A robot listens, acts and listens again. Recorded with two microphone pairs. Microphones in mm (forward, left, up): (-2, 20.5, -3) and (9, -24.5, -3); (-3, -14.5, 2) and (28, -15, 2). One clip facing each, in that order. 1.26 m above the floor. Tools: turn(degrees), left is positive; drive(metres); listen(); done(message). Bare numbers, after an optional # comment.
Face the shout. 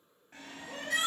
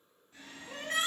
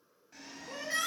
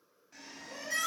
# The shout: 125° right.
turn(-125)
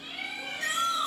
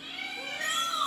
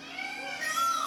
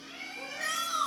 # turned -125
# The shout is now 30° right.
turn(-30)
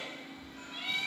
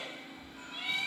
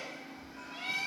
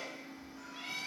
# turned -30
listen()
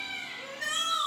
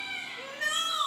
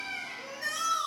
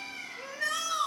# The shout is now 15° right.
turn(-15)
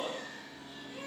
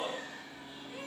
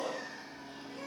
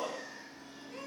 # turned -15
done("Facing the shout.")